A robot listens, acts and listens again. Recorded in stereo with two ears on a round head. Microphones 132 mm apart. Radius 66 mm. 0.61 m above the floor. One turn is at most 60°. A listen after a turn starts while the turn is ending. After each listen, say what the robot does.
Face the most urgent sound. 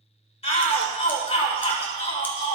Turn 40° left.
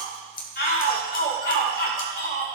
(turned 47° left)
Turn 60° left.
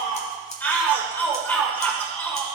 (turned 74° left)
Turn 15° left.
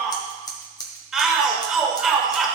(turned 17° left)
Found it: a shout, straight ahead.